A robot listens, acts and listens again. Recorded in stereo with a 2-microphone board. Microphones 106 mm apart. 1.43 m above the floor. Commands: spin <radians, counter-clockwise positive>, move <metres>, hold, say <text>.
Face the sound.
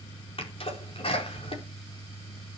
spin 0.96
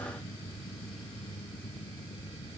hold
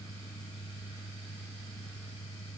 say I heard a sneeze, but can't make it out now. It was about straight ahead or 70° left.